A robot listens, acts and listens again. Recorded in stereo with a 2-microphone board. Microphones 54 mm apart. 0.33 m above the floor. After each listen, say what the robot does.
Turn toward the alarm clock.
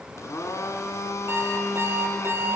Turn 45° right.
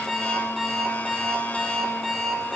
Found it: an alarm clock, straight ahead, over 4 m away.